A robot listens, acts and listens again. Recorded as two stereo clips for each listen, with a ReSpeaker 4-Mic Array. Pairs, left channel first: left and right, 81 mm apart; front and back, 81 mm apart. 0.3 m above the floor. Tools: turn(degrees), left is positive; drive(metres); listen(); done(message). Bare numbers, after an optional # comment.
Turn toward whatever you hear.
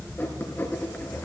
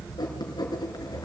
# The writing: 30° left.
turn(30)
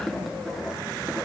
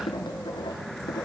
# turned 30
done("Found it: writing, straight ahead.")